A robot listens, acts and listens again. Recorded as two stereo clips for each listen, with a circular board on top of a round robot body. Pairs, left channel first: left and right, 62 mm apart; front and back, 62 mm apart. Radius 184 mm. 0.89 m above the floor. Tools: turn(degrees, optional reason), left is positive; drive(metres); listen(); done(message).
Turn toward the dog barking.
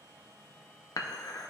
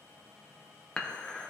listen()
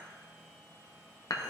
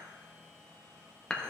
listen()
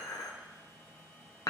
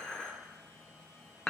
done("I can't make out a dog barking to turn to.")